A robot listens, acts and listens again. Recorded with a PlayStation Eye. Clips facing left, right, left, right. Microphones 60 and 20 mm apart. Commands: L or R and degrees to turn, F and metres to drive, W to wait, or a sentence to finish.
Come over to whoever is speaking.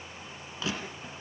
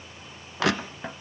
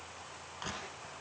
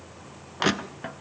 W
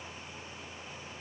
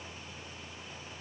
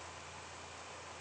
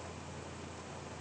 W
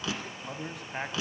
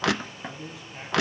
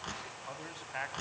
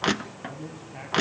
L55
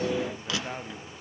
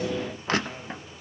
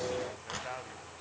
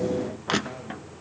W
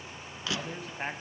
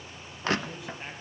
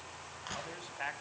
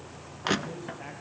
L50
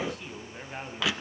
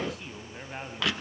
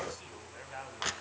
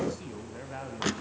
F1.0
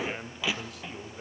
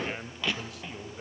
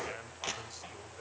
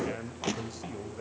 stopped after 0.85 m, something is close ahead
I am next to the man speaking.